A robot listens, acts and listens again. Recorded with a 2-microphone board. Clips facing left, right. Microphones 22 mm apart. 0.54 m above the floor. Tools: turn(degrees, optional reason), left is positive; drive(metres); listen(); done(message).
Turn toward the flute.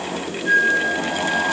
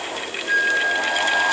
turn(degrees=65, reason="The flute: about 65° left or 115° left.")
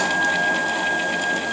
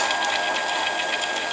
listen()
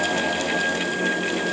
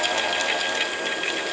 listen()
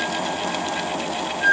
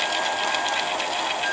turn(degrees=45, reason="So it is at 45° left.")
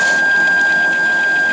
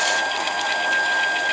done("Found it: a flute, straight ahead.")